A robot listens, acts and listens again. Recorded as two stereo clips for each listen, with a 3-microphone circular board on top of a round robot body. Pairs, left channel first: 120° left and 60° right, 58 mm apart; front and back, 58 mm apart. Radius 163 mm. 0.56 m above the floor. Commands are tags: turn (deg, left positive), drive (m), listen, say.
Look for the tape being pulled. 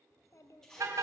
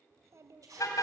<turn deg="-160"/>
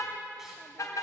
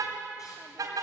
<listen/>
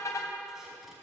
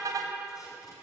<listen/>
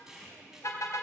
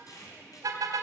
<turn deg="25"/>
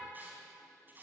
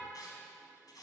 <say>Facing the tape being pulled.</say>